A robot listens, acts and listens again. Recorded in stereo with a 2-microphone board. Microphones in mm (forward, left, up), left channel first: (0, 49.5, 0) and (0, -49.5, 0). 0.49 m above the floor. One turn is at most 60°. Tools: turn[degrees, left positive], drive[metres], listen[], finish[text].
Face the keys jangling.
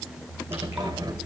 Thought: The keys jangling: about 45° right or 135° right.
Action: turn[-45]
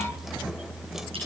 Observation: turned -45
Action: listen[]
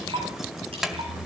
Action: finish[Facing the keys jangling.]